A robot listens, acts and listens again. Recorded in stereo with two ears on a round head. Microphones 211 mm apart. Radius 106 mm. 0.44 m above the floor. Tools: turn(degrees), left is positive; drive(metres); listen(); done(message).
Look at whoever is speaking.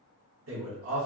turn(degrees=-55)
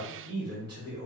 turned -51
turn(degrees=-25)
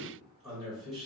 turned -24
done("Found it: a man speaking, straight ahead, 1 to 2 m away.")